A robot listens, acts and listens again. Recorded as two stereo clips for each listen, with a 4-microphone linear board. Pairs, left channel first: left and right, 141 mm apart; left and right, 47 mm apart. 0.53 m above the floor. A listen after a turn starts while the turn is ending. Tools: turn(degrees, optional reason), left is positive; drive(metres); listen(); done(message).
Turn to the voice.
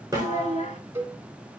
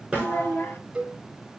turn(degrees=55, reason="The child speaking: about 55° left or 125° left.")
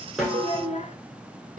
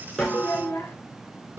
turn(degrees=65, reason="So it is at 65° left.")
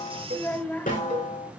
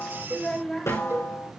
turn(degrees=15, reason="The child speaking is now 15° left.")
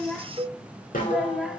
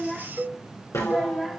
done("Found it: a child speaking, straight ahead, 1 to 2 m away.")